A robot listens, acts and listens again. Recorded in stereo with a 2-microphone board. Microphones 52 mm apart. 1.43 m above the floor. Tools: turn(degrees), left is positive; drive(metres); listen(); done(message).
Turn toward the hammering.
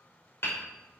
turn(degrees=55)
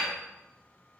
done("Found it: hammering, straight ahead, 2 to 4 m away.")